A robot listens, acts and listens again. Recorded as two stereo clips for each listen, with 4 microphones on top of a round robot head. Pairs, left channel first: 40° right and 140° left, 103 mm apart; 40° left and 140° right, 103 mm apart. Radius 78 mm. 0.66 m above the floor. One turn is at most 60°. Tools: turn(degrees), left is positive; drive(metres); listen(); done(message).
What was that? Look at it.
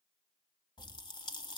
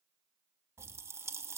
turn(degrees=-60)
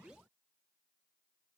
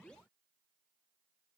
turn(degrees=-20)
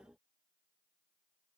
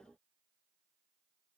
done("I heard a pop from this way, but can't make it out now.")